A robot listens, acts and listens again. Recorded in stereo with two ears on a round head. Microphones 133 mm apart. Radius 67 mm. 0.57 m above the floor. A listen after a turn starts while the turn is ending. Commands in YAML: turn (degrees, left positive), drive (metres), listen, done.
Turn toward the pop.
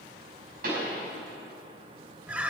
turn: -70
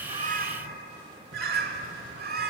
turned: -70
listen: true
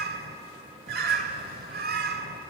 done: "I heard a pop, but can't make it out now. It was about straight ahead or 40° right."